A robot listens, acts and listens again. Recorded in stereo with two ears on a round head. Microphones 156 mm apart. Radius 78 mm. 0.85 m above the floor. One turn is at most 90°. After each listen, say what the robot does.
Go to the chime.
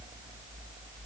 Keep listening.
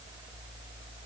Keep listening.
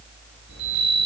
Turn 90° right.
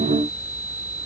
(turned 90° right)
Turn 10° right.
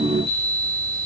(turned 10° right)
Drive 1.0 m forward.
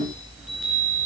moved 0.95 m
Drive 1.0 m forward.
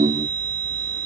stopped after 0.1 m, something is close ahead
Something is in my way. I am facing the chime but have not reached it.